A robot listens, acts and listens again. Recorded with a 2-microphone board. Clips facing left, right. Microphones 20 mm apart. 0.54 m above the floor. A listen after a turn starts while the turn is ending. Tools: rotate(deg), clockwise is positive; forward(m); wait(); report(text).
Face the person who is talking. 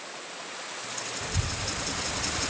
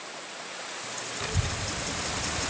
rotate(50)
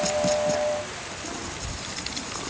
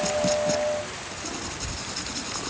rotate(-30)
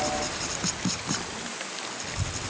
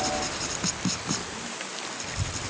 rotate(-25)
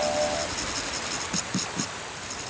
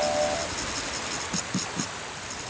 rotate(-10)
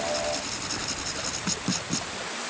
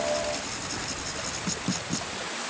report("Found it: a child speaking, straight ahead.")